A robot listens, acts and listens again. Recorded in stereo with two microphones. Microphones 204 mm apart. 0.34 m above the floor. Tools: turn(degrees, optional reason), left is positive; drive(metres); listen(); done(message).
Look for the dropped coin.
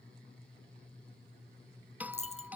turn(degrees=30, reason="The dropped coin: about 30° left or 150° left.")
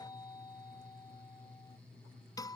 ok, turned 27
listen()
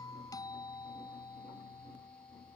done("I heard a dropped coin, but can't make it out now. It was about 5° left or 120° left.")